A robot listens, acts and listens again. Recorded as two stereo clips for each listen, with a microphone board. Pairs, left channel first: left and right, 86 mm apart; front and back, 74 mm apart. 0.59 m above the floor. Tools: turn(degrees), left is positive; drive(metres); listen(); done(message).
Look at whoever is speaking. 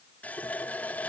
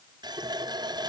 listen()
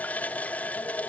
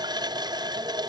listen()
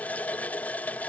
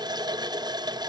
done("I can't make out anyone speaking to turn to.")